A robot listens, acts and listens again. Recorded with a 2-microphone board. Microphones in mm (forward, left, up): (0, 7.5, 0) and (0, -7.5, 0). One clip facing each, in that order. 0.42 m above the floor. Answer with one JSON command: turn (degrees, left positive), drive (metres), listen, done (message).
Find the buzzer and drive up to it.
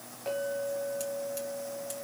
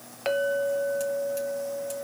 {"listen": true}
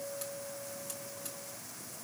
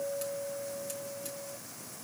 {"listen": true}
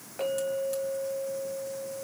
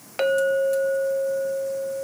{"done": "I can't make out a buzzer, only a clink."}